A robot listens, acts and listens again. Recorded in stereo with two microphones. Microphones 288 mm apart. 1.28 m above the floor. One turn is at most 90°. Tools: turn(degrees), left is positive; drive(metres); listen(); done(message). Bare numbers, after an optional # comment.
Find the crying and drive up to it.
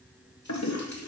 listen()
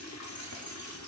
listen()
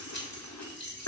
done("I can't make out crying to turn to.")